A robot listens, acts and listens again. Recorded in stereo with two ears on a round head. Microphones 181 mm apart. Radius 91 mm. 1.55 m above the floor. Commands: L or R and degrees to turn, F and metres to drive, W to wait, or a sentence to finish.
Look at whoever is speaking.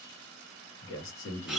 L70
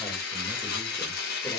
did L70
W
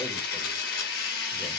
W
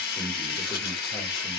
L15
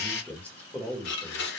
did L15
L10
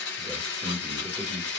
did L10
Found it: a man speaking, straight ahead, under 1 m away.